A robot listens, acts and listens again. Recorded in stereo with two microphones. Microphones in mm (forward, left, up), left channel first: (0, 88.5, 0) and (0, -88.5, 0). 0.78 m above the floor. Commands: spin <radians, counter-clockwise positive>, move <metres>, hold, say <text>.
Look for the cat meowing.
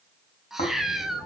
spin 0.52
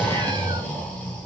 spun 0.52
hold
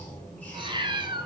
spin -0.61
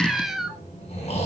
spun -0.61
say Facing the cat meowing.